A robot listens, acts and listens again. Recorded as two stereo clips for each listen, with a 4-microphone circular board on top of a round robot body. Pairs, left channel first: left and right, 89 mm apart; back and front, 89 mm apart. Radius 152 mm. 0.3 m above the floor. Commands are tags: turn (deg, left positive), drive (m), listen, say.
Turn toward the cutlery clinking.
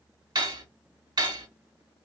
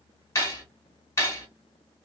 <turn deg="-125"/>
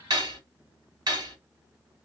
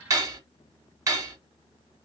<turn deg="-50"/>
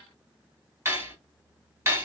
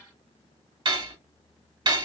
<turn deg="-25"/>
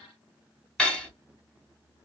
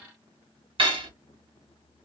<turn deg="10"/>
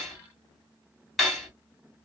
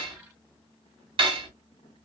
<say>Facing the cutlery clinking.</say>